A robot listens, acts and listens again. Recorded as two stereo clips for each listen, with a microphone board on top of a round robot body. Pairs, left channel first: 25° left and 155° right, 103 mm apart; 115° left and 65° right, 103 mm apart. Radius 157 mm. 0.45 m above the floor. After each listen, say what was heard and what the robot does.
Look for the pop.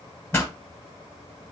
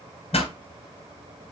The pop: 90° left. Turn 90° left.
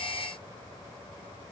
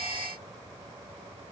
I heard a pop from this way, but can't make it out now.